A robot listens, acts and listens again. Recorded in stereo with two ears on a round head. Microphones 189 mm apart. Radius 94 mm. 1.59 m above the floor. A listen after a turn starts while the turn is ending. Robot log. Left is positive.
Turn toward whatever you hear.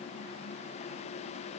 cmd idle
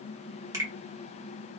note: The finger snap: about 15° right or 165° right.
cmd yaw -15
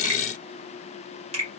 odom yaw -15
note: So it is at 150° right.
cmd yaw -150
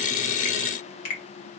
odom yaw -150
note: The finger snap is now 45° left.
cmd yaw +45
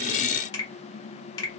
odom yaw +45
note: The finger snap is now 20° left.
cmd yaw +20
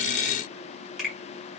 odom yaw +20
end: Found it: a finger snap, straight ahead.